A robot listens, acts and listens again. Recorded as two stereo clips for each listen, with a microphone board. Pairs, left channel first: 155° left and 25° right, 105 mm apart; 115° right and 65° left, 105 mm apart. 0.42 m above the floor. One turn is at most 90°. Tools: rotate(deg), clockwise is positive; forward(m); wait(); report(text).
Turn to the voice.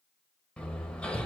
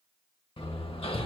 wait()
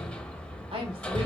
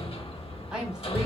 rotate(15)
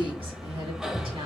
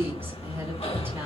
report("Facing the woman speaking, 2 to 4 m away.")